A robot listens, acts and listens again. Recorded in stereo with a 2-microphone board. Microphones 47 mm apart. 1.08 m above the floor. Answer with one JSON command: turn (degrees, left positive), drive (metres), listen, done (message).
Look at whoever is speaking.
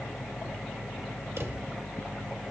{"listen": true}
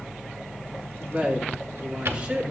{"turn": -25}
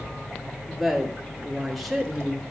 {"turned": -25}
{"done": "Facing the woman speaking."}